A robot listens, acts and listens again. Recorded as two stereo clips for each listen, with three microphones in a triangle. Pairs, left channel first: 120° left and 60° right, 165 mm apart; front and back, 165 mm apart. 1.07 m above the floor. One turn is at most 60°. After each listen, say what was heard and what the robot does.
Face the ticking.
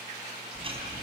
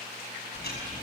Facing the ticking.